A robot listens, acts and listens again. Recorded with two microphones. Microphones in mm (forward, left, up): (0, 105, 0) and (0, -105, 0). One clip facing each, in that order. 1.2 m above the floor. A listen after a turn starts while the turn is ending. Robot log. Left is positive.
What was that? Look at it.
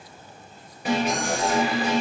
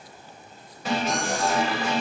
cmd yaw +30
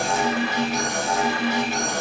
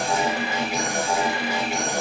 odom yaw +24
note: So it is at 15° right.
cmd yaw -15
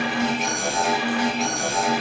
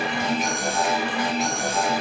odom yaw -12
end: Found it: an alarm, straight ahead, over 4 m away.